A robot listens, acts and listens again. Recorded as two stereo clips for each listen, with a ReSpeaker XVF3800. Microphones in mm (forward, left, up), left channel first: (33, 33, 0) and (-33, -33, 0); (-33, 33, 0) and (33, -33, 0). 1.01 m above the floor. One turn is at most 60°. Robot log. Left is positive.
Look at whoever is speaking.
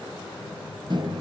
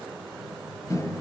cmd idle
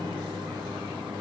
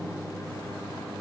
cmd idle
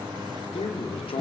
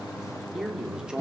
note: The man speaking: 35° left.
cmd yaw +35
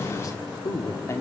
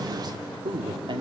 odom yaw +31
note: The man speaking is now 15° right.
cmd yaw -15
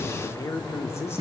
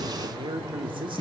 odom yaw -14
note: The man speaking is now 20° right.
cmd yaw -20
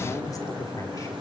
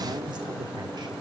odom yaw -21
end: Facing the man speaking, 2 to 4 m away.